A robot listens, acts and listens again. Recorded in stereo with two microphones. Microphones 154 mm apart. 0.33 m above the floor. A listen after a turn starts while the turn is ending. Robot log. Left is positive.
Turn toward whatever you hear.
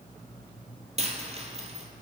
note: The dropped coin: about 45° right or 135° right.
cmd yaw -45
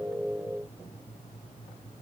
cmd idle
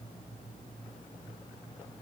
end: I heard a dropped coin, but can't make it out now. It was about straight ahead or 90° right.